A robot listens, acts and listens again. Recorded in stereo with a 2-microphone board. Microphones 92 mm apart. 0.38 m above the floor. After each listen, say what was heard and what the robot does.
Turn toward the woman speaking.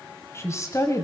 The woman speaking: about 35° left or 145° left. Turn 35° left.
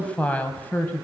So it is at 20° left. Turn 20° left.
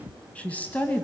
The woman speaking is now 20° left. Turn 20° left.
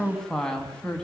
The woman speaking is now 10° left. Turn 10° left.
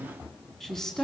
Facing the woman speaking, 2 to 4 m away.